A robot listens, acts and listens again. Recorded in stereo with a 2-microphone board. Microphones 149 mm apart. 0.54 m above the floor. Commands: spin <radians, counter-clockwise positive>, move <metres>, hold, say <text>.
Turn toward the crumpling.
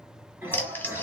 spin 0.52
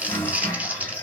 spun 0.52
spin -0.17
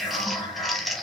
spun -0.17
say Facing the crumpling, under 1 m away.